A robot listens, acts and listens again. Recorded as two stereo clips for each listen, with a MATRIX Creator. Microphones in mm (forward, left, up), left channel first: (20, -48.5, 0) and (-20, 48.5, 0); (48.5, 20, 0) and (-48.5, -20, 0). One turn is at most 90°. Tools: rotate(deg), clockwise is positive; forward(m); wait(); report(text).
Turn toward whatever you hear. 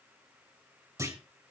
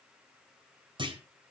rotate(-90)
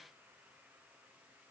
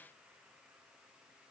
rotate(-80)
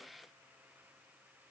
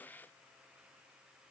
report("Facing where the clunk came from. I can't hear it now.")